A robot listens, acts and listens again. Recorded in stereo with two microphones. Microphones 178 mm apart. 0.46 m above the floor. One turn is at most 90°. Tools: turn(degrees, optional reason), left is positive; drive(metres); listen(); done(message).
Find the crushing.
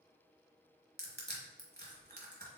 turn(degrees=-65, reason="The crushing: about 65° right or 115° right.")
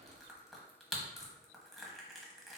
done("Found it: crushing, straight ahead, 1 to 2 m away.")